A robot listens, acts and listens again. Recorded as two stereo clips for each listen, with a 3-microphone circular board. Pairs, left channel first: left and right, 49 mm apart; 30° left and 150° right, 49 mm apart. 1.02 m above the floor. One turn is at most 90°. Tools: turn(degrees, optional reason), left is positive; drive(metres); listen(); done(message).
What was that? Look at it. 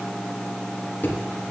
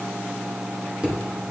turn(degrees=90, reason="The thud: 140° left.")
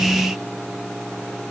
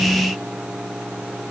turn(degrees=50, reason="Nothing new. It was at 50° left.")
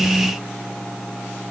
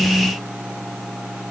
done("Facing where the thud came from. I can't hear it now.")